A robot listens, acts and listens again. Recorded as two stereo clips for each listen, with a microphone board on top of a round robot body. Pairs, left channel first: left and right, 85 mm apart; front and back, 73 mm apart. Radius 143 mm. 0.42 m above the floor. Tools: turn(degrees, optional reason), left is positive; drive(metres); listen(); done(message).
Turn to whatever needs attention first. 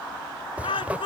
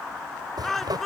turn(degrees=85, reason="The shout: 85° left.")
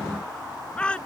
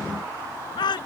turn(degrees=15, reason="The shout is now 15° left.")
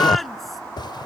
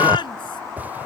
listen()
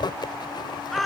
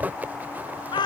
done("Found it: a shout, straight ahead.")